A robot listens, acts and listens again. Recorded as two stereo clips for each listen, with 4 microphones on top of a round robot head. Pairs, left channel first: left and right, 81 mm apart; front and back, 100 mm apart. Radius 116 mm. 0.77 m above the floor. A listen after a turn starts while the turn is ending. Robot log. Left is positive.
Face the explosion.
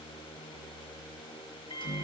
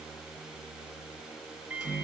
cmd idle
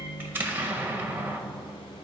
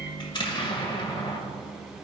note: The explosion: 25° right.
cmd yaw -25
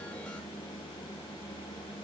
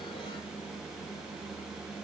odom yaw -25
end: Facing where the explosion came from. I can't hear it now.